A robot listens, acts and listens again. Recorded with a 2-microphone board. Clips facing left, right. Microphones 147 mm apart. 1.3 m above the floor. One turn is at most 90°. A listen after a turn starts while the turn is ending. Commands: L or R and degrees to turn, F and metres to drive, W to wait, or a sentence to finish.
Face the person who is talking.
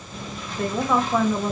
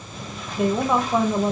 R20
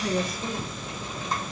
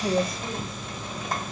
W
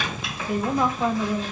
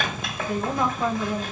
Facing the woman speaking, under 1 m away.